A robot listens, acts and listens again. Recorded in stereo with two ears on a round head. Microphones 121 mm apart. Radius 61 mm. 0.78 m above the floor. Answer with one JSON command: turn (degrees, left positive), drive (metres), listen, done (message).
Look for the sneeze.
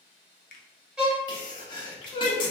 {"turn": 35}
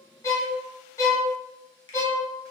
{"listen": true}
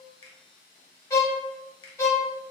{"done": "I heard a sneeze, but can't make it out now. It was about straight ahead or 110° left."}